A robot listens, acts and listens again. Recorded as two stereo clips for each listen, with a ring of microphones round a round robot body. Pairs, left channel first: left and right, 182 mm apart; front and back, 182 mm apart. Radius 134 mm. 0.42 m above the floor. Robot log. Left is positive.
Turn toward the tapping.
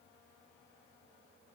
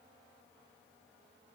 cmd idle
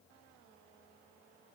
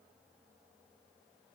cmd idle
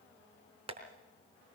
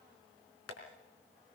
note: The tapping: 35° right.
cmd yaw -35
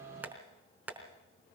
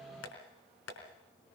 note: The tapping is now 10° right.
cmd yaw -10
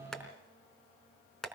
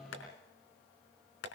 end: Found it: tapping, straight ahead.